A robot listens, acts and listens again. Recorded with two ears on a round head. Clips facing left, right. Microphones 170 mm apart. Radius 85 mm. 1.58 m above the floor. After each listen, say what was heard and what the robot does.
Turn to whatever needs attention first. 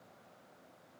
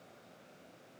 Keep listening.
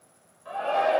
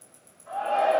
Turn 90° left.
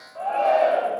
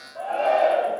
So it is at 10° right. Turn 10° right.
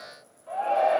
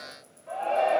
Facing the shout.